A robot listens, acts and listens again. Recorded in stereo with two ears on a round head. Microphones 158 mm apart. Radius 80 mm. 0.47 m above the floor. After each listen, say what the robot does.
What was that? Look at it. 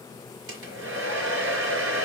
Turn 90° right.
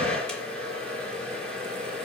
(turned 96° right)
Found it: a hair dryer, straight ahead, 2 to 4 m away.